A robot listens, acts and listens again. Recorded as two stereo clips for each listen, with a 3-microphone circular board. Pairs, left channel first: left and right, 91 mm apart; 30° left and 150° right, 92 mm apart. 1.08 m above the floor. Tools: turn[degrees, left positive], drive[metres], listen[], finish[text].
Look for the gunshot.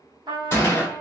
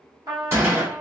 Thought: The gunshot: 150° left.
Action: turn[150]
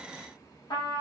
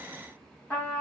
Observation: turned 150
Action: finish[I heard a gunshot from this way, but can't make it out now.]